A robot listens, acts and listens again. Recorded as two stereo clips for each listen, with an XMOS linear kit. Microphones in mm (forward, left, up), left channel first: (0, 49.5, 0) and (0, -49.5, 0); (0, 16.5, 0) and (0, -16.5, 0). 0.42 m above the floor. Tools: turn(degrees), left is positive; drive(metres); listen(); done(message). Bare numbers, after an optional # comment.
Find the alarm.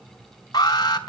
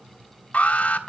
# The alarm: about 40° left or 140° left.
turn(40)
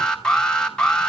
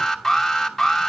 # So it is at 10° left.
turn(10)
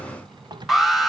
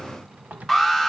done("Facing the alarm, 2 to 4 m away.")